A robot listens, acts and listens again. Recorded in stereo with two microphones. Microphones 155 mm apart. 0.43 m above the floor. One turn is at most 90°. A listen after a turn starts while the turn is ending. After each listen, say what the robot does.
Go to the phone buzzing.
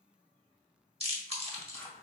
Keep listening.
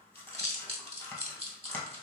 Keep listening.
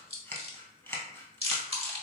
I can't make out a phone buzzing to turn to.